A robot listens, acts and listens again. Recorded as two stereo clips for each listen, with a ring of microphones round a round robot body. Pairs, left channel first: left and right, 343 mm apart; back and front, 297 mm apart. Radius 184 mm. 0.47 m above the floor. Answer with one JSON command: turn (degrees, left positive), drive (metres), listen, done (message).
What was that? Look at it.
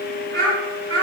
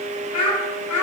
{"turn": -145}
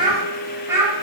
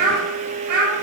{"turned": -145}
{"turn": -10}
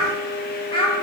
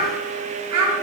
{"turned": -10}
{"turn": 20}
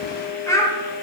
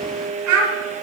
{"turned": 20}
{"turn": 10}
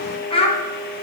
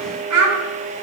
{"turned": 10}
{"turn": 20}
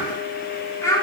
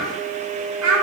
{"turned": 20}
{"turn": 10}
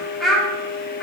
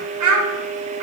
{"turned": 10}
{"done": "Facing the child speaking, 1 to 2 m away."}